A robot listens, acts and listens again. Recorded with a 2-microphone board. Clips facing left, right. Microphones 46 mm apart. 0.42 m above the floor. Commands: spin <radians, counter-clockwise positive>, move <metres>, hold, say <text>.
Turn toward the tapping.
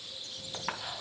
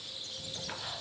spin 1.22
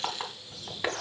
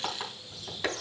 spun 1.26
spin 0.26
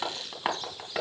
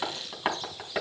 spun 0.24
say Found it: tapping, straight ahead.